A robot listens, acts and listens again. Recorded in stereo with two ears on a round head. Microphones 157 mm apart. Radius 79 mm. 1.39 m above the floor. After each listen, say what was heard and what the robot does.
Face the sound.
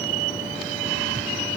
Keep listening.
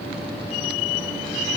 Keep listening.
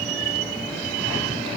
I can't make out anything to turn to.